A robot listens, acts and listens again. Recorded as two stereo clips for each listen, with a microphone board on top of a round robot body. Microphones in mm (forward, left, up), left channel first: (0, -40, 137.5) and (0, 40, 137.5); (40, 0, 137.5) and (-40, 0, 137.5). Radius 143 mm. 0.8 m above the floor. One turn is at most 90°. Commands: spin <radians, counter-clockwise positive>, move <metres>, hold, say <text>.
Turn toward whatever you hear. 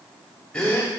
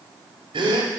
spin -1.57
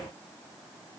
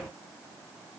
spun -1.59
spin -1.40
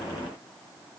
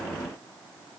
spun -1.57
spin 0.17
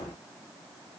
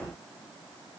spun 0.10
say I heard a gasp from this way, but can't make it out now.